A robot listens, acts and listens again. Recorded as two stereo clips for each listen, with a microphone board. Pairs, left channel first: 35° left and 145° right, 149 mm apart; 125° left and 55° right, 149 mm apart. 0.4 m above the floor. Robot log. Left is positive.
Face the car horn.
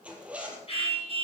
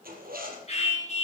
note: The car horn: 165° left.
cmd yaw +165
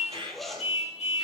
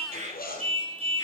end: Facing the car horn, 2 to 4 m away.